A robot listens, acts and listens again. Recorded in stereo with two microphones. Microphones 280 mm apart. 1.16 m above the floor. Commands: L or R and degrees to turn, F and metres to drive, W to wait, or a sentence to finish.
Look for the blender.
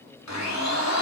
L90
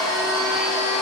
Facing the blender.